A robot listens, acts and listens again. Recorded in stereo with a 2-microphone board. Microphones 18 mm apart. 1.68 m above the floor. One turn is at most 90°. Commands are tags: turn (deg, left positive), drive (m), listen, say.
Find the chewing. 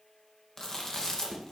<turn deg="35"/>
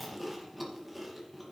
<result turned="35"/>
<say>Facing the chewing, 2 to 4 m away.</say>